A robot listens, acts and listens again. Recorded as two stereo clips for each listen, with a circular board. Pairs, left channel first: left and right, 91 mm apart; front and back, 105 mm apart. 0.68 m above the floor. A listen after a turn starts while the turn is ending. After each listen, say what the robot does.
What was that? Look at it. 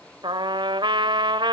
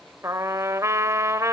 Turn 120° right.
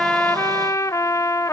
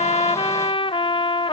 Turn 35° left.
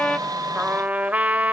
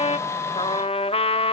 Turn 15° right.
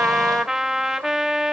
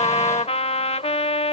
Found it: a trumpet, straight ahead, 1 to 2 m away.